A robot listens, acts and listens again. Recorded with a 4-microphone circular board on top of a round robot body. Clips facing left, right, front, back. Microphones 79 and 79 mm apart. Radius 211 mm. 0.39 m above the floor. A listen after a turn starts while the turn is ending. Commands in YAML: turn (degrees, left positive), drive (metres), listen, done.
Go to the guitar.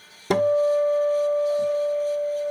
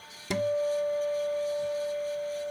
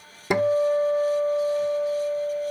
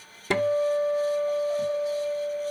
turn: 70
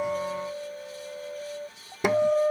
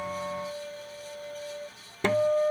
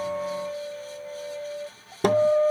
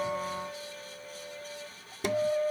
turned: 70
turn: 15
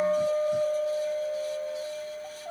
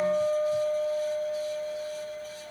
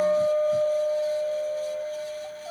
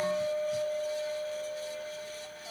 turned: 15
drive: 1.0
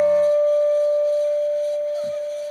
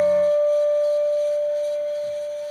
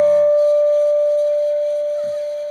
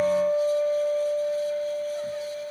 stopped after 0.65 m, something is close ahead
turn: 10
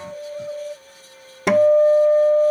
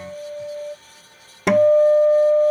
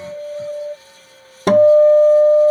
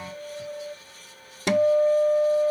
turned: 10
done: "Arrived at the guitar, straight ahead."